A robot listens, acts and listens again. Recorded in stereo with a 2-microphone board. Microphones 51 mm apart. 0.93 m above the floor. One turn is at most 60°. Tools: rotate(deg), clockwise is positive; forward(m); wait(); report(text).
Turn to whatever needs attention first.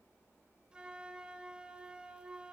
wait()
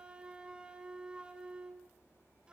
wait()
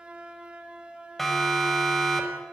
rotate(-30)
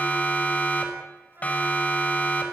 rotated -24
rotate(-60)
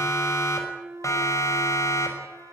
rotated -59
rotate(-60)
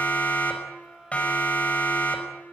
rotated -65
rotate(-30)
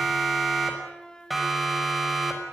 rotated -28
report("Facing the siren, over 4 m away.")